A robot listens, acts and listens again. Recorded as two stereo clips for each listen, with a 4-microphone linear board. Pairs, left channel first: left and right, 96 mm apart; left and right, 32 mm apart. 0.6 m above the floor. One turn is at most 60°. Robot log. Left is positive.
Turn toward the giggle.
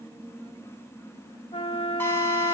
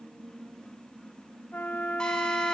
cmd idle
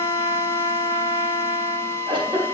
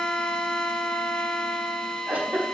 note: The giggle: about 60° right or 120° right.
cmd yaw -60
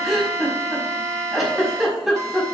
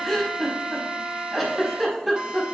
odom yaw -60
end: Found it: a giggle, straight ahead.